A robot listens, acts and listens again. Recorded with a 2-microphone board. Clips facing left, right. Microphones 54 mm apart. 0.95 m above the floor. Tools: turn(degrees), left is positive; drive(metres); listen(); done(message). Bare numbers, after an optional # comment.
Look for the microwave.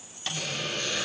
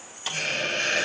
turn(-30)
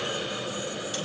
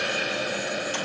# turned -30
listen()
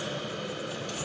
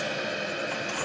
listen()
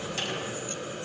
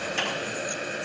done("I heard a microwave, but can't make it out now. It was about 25° left or 145° right.")